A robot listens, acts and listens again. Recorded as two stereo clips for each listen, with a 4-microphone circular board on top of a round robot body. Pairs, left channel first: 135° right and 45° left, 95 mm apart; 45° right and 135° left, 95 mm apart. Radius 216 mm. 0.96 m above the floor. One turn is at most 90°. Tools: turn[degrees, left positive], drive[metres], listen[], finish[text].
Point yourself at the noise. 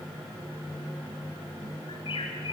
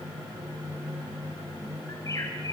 Thought: The bird: 100° right.
Action: turn[-90]
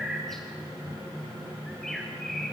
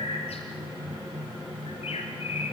Thought: The bird is now 50° right.
Action: turn[-50]
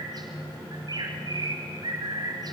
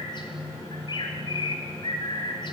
Action: finish[Facing the bird, 1 to 2 m away.]